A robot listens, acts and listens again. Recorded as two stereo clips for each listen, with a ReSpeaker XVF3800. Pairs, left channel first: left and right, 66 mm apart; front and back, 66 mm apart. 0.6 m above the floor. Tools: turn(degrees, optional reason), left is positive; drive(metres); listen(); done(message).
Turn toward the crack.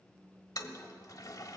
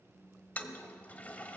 listen()
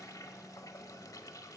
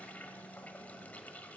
listen()
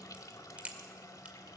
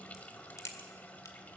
turn(degrees=-20, reason="The crack: 20° right.")
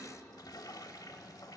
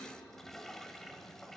done("Facing where the crack came from. I can't hear it now.")